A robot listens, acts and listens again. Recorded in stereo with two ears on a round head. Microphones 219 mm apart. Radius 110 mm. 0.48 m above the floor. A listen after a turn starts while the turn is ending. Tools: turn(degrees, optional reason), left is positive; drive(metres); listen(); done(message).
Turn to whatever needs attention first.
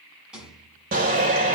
turn(degrees=-35, reason="The shout: about 35° right or 145° right.")
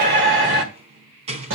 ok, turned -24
turn(degrees=-115, reason="So it is at 115° right.")
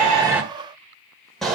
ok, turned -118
done("Found it: a shout, straight ahead.")